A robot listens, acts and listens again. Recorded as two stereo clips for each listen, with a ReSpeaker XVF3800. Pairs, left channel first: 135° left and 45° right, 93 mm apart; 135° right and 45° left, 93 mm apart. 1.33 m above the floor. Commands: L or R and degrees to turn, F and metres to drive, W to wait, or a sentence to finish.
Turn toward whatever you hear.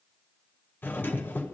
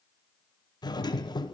R160
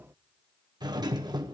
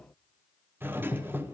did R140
R20
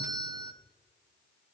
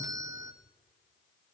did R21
Found it: a doorbell, straight ahead, under 1 m away.